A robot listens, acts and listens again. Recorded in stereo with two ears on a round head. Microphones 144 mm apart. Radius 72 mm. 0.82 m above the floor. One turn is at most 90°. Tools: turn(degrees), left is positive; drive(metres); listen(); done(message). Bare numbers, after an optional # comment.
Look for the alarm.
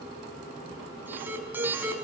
turn(-30)
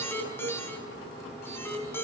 # So it is at 15° left.
turn(15)
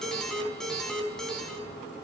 done("Found it: an alarm, straight ahead.")